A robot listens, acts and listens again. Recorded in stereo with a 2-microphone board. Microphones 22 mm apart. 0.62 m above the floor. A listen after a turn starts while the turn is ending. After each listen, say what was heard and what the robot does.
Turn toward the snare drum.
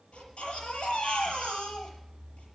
Keep listening.
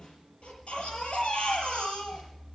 The snare drum: about 45° left or 135° left. Turn 45° left.
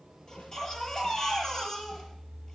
Keep listening.
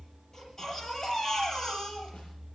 Keep listening.
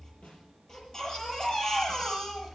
So it is at 90° left. Turn 90° left.
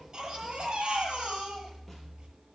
Keep listening.
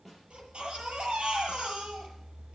Found it: a snare drum, straight ahead, over 4 m away.